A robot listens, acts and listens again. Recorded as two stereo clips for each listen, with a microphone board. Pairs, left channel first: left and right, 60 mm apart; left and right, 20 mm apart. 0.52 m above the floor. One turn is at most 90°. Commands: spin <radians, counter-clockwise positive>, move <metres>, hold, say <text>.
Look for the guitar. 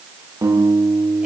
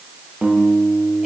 spin -1.57
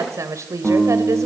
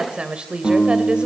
say Found it: a guitar, straight ahead.